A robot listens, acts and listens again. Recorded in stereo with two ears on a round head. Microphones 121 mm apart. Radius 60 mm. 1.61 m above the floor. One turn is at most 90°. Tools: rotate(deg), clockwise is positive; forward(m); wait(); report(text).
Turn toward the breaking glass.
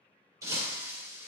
rotate(25)
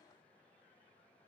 wait()
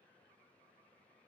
report("I heard breaking glass, but can't make it out now. It was about straight ahead or 130° right.")